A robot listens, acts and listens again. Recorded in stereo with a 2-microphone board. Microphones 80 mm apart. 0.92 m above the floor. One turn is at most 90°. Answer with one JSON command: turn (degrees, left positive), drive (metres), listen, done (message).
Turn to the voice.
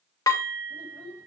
{"turn": 30}
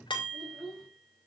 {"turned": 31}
{"done": "Found it: a child speaking, straight ahead, over 4 m away."}